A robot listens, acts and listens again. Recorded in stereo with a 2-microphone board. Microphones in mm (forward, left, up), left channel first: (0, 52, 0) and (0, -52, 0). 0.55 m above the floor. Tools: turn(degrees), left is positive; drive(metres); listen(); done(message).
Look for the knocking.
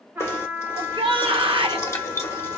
turn(degrees=25)
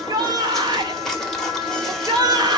done("Facing the knocking.")